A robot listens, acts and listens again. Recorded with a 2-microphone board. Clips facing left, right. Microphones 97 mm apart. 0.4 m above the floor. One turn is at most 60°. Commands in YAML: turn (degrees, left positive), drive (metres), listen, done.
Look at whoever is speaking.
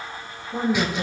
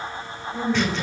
turn: 55
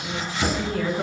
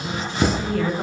done: "Facing the woman speaking."